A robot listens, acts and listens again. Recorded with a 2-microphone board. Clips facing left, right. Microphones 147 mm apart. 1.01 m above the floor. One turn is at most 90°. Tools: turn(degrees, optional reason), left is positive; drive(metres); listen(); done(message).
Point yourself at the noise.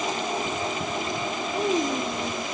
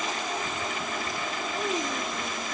turn(degrees=15, reason="The child speaking: about 15° left or 165° left.")
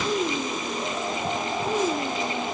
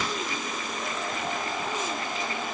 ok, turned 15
turn(degrees=35, reason="The child speaking: about 35° left or 145° left.")
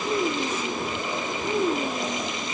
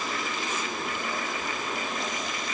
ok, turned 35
turn(degrees=90, reason="So it is at 105° left.")
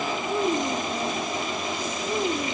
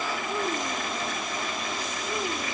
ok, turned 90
turn(degrees=15, reason="The child speaking is now 15° left.")
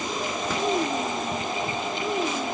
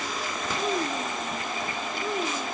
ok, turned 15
done("Found it: a child speaking, straight ahead.")